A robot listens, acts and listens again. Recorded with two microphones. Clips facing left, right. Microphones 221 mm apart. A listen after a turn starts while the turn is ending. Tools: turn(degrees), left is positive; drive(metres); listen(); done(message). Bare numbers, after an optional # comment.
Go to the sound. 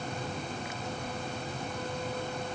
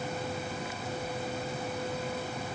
listen()
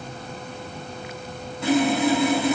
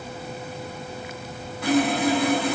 # The sawing: about 25° left or 155° left.
turn(25)
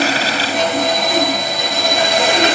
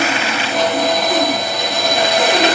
drive(1.0)
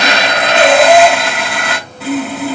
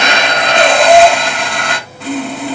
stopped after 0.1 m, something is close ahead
# The sawing is now 10° left.
turn(10)
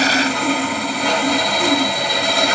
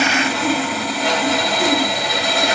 done("Something is in my way. I am facing the sawing but have not reached it.")